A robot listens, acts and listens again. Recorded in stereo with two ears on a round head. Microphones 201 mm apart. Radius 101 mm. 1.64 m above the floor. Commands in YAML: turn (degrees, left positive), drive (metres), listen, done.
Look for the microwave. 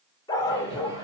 turn: -15
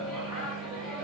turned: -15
done: "Facing the microwave, over 4 m away."